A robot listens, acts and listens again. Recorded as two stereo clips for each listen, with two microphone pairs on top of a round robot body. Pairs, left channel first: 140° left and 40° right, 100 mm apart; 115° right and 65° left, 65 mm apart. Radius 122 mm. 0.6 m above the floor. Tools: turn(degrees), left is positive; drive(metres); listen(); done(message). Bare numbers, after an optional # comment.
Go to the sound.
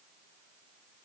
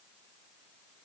listen()
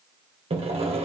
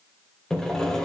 # The sawing: 35° right.
turn(-35)
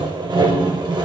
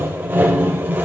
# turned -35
drive(1.0)
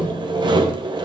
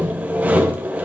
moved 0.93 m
drive(1.0)
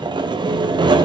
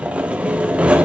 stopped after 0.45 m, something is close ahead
done("I am next to the sawing.")